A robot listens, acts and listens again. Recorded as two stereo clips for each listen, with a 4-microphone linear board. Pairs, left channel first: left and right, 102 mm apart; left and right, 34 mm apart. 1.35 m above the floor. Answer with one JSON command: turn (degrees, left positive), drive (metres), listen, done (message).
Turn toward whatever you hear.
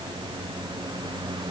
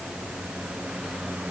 {"listen": true}
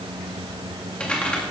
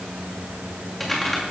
{"turn": 30}
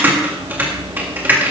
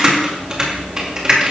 {"turn": -20}
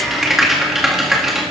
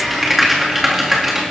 {"done": "Facing the typing on a keyboard, 2 to 4 m away."}